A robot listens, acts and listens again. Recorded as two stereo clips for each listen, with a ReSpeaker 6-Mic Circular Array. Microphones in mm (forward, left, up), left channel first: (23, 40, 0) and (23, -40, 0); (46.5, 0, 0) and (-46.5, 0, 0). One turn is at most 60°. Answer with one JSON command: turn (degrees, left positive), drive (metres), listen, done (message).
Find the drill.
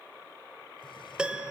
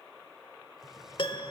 {"listen": true}
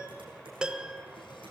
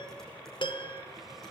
{"listen": true}
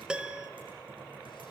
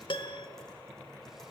{"done": "I can't make out a drill, only typing on a keyboard and a piano."}